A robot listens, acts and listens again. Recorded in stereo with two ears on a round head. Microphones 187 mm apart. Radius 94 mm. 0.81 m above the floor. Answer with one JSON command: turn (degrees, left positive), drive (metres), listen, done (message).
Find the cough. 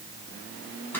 {"listen": true}
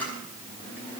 {"listen": true}
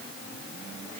{"done": "I can't make out a cough, only a camera shutter."}